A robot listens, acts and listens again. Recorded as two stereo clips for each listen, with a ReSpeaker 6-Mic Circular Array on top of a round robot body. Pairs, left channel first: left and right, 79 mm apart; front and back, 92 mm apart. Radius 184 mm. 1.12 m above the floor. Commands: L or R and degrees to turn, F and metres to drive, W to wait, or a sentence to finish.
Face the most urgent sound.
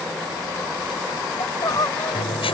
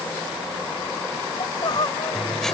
L45
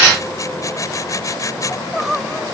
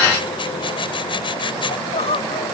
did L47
Found it: crying, straight ahead.